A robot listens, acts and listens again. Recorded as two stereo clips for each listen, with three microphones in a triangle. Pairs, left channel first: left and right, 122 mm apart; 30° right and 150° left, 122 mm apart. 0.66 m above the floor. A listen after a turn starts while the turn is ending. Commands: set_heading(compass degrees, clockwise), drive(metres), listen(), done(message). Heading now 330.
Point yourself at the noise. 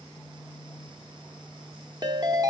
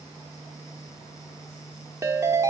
set_heading(115)
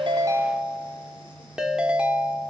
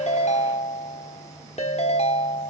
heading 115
set_heading(125)
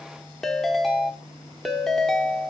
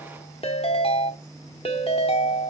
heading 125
done("Facing the ringtone, 1 to 2 m away.")